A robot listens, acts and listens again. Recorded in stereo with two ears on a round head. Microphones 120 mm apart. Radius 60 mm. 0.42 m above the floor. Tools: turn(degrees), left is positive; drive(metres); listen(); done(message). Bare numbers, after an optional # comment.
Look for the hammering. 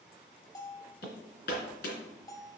turn(90)
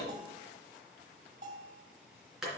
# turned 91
done("Found it: hammering, straight ahead.")